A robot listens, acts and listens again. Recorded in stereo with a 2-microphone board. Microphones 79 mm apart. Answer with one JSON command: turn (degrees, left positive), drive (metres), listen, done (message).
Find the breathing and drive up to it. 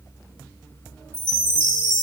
{"listen": true}
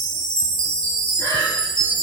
{"turn": 45}
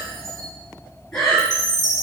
{"turn": 10}
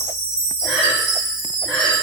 {"drive": 1.0}
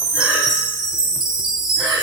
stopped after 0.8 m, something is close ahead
{"done": "Arrived at the breathing, straight ahead."}